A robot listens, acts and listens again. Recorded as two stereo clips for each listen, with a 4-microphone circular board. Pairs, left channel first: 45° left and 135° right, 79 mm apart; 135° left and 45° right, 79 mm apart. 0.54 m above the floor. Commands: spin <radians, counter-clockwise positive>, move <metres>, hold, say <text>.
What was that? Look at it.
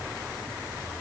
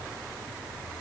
hold
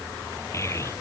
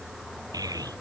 spin -0.17
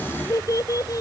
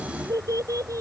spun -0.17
say Found it: a child speaking, straight ahead.